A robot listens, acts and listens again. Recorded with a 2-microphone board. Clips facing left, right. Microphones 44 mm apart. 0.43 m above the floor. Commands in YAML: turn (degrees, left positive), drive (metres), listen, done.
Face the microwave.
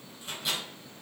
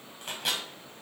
turn: -60
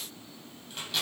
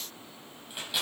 turn: -10
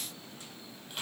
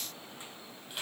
done: "Facing the microwave."